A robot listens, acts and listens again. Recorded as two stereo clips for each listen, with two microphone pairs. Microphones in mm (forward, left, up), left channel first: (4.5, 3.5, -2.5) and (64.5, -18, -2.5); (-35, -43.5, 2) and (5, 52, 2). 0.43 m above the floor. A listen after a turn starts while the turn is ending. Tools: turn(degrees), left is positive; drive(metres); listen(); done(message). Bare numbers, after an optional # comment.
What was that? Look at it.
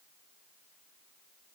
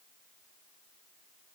listen()
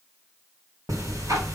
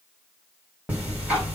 # The ticking: 10° right.
turn(-10)
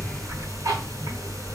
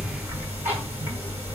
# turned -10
done("Found it: ticking, straight ahead, 2 to 4 m away.")